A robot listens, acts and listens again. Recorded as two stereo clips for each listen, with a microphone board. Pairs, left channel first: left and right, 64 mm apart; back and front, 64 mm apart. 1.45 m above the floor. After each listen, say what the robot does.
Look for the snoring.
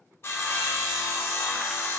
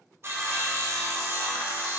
Keep listening.
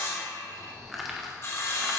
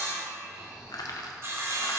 Turn 70° right.
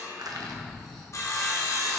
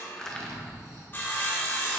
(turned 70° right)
Found it: snoring, straight ahead.